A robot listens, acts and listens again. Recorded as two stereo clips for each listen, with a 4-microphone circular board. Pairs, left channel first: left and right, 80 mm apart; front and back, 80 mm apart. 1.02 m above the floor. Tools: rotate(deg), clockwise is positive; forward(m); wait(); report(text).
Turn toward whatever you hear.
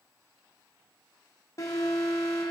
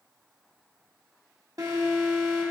rotate(-140)
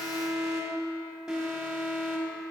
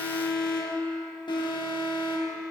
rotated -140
report("Facing the alarm.")